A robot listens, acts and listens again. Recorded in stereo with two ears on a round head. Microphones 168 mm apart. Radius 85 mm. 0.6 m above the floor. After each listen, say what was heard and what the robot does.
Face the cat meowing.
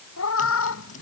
Turn 90° left.
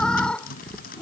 Found it: a cat meowing, straight ahead.